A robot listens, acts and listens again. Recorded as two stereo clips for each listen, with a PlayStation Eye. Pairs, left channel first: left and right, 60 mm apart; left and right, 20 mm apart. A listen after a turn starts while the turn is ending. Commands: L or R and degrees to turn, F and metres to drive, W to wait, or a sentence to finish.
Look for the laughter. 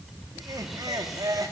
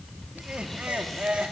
R90
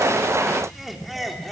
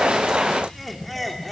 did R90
Facing the laughter.